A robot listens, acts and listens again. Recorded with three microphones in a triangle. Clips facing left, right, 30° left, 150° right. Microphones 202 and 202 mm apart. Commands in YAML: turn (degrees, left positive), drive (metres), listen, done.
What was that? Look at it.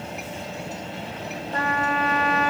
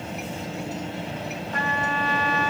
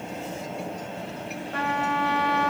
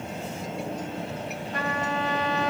turn: 40
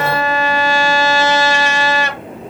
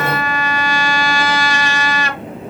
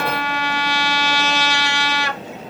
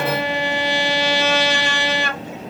turn: 30
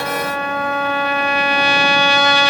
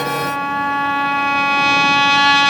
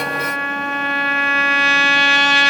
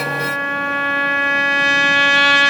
done: "Facing the trumpet, 1 to 2 m away."